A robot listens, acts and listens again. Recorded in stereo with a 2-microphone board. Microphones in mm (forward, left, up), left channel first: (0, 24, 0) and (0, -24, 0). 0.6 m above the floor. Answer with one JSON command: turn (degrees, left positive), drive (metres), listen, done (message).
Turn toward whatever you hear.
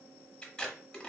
{"turn": 20}
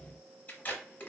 {"turn": 140}
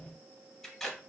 {"turn": 10}
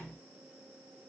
{"listen": true}
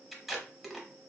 {"done": "Found it: tape being pulled, straight ahead."}